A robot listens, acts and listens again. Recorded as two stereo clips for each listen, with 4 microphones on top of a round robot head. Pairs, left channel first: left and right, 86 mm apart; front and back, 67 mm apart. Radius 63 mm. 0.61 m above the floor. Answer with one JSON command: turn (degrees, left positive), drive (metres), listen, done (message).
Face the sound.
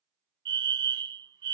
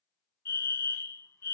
{"turn": -60}
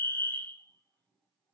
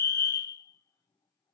{"turn": 25}
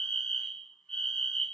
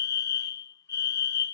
{"turn": 10}
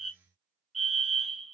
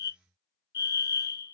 {"done": "Found it: a fire alarm, straight ahead."}